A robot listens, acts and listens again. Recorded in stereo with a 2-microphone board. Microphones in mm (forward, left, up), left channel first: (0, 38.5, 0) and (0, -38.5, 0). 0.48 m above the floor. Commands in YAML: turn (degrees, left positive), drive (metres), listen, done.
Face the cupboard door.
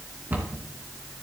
turn: -25
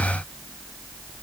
listen: true
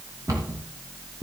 turn: -125
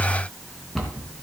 done: "Facing the cupboard door."